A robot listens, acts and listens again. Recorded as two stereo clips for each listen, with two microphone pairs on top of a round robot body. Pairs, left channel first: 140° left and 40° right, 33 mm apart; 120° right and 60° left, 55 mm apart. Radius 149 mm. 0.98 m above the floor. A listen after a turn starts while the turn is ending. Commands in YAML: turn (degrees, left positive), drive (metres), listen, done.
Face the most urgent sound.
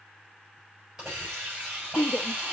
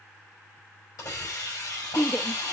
turn: 160
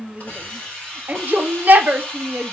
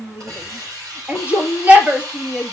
turn: -10
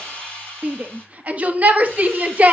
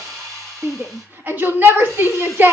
done: "Facing the shout."